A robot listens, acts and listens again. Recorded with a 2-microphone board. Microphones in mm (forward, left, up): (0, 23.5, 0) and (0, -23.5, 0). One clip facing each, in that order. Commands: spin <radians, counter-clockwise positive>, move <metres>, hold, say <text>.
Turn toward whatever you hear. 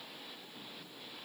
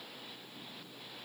hold
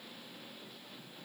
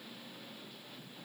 hold
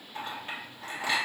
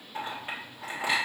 spin -0.35
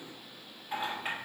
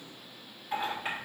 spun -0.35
say Found it: a clink, straight ahead.